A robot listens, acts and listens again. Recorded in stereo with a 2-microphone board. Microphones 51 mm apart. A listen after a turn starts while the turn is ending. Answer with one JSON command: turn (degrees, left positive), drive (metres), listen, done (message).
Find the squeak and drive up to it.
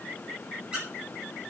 {"turn": -20}
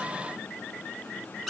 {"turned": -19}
{"drive": 1.0}
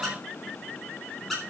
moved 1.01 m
{"drive": 1.0}
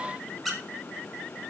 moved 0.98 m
{"drive": 1.0}
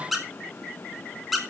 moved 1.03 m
{"drive": 1.0}
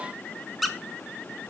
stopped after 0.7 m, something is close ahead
{"done": "I am next to the squeak."}